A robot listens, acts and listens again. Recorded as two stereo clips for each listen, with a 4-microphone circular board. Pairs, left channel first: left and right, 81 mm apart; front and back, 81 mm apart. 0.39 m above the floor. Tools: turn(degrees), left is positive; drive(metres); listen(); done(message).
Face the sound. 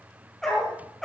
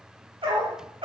turn(degrees=175)
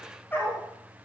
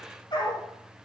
turn(degrees=25)
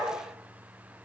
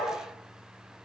turn(degrees=10)
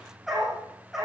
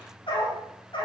done("Found it: a dog barking, straight ahead.")